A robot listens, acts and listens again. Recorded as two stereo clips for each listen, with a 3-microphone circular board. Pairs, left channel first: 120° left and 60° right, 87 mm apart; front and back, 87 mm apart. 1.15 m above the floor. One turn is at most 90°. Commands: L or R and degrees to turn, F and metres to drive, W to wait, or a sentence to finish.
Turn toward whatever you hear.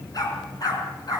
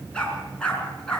L80
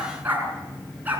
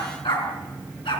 L10
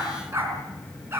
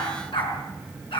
Found it: a dog barking, straight ahead, over 4 m away.